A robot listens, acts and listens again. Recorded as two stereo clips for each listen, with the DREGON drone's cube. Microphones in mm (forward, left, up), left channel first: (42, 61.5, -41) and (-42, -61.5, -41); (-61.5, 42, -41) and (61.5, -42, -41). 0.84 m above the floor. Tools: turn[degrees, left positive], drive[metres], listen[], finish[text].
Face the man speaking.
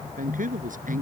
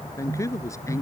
Thought: The man speaking: 145° right.
Action: turn[-145]
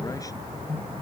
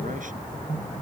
Action: listen[]
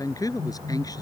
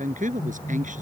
Thought: The man speaking is now 10° right.
Action: turn[-10]
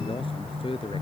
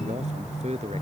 Action: finish[Facing the man speaking.]